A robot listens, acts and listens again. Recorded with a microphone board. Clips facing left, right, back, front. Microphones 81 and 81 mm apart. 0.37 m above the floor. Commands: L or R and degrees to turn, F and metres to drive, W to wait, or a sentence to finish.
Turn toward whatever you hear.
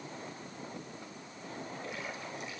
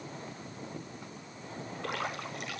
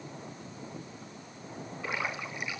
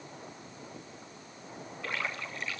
R105
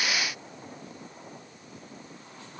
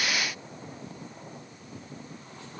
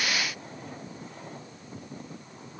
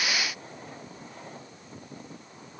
I heard a splash from this way, but can't make it out now.